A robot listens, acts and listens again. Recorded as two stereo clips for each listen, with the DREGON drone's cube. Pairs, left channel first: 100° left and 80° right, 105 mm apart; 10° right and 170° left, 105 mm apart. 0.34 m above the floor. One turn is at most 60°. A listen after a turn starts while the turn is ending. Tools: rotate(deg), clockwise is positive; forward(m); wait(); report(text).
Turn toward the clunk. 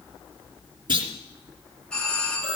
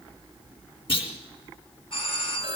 rotate(40)
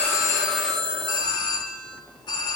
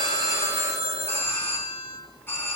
report("Facing where the clunk came from. I can't hear it now.")